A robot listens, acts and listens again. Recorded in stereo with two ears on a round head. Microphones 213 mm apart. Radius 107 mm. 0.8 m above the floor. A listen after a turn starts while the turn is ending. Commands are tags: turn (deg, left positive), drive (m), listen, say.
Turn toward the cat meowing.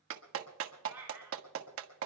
<turn deg="-30"/>
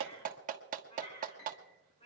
<turn deg="30"/>
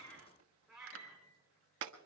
<say>Facing the cat meowing, over 4 m away.</say>